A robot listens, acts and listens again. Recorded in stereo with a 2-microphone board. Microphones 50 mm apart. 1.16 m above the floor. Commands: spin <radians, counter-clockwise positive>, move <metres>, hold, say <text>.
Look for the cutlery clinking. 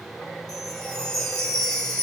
hold
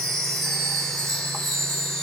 hold
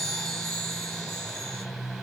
say I can't make out cutlery clinking to turn to.